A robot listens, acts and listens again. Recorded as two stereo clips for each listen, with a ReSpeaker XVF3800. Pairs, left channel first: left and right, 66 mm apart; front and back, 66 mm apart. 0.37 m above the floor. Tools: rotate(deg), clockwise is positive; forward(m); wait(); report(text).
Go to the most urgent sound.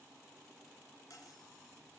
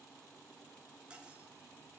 wait()
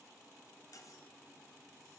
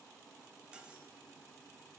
wait()
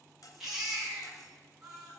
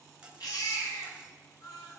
forward(1.0)
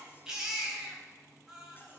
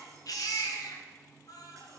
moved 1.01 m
rotate(10)
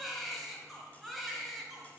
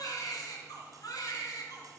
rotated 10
forward(1.0)
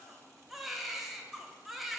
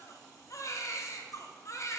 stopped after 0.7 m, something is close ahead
report("I am next to the baby crying.")